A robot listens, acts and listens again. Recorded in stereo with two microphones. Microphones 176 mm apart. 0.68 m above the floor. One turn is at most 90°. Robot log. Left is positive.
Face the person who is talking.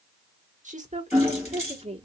note: The woman speaking: about 35° right or 145° right.
cmd yaw -35
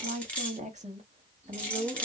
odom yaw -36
note: The woman speaking: about 35° right or 145° right.
cmd yaw -35
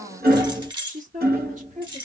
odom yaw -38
note: So it is at 135° right.
cmd yaw -90
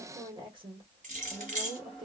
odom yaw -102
note: The woman speaking is now 30° right.
cmd yaw -30
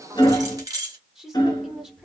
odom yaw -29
end: Found it: a woman speaking, straight ahead.